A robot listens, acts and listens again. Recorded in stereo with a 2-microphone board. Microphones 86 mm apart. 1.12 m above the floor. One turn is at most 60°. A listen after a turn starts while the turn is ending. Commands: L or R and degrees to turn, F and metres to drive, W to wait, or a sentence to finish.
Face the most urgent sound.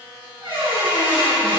W
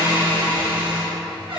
W
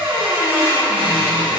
I can't make out anything urgent, only a squeak.